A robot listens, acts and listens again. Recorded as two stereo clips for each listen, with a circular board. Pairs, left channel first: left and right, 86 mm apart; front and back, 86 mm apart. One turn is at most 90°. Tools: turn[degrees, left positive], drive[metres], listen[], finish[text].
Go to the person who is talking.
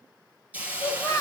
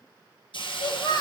Thought: The child speaking: 40° left.
Action: turn[40]
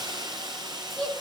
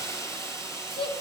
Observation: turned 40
Action: drive[1.0]
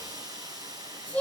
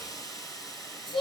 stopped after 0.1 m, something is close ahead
Thought: The child speaking is now 10° left.
Action: turn[10]
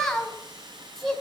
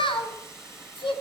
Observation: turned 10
Action: finish[Blocked. The child speaking is further on, straight ahead.]